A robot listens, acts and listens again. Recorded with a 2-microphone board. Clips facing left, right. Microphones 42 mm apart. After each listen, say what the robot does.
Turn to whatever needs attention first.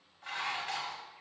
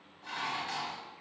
Keep listening.
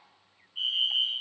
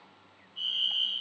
Turn 55° left.
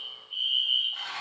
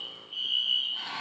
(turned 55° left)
Turn 15° left.
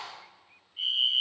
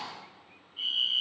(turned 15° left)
Found it: a fire alarm, straight ahead, 2 to 4 m away.